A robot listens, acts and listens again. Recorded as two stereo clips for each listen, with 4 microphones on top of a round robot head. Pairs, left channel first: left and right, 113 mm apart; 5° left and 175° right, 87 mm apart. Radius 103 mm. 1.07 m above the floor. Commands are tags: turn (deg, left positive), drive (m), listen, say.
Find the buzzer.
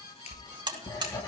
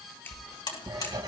<turn deg="-40"/>
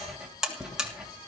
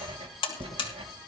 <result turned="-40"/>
<say>Facing the buzzer.</say>